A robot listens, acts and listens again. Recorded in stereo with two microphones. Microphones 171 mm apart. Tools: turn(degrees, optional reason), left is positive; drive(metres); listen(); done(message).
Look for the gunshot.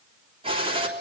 turn(degrees=-30, reason="The gunshot: about 30° right or 150° right.")
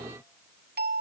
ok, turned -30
listen()
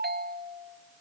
done("I heard a gunshot, but can't make it out now. It was about straight ahead or 120° right.")